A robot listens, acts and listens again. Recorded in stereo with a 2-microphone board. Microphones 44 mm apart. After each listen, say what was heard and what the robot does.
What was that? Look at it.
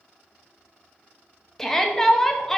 Turn 30° left.
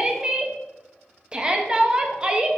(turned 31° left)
So it is at 20° right. Turn 20° right.
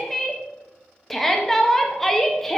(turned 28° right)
Found it: a shout, straight ahead, under 1 m away.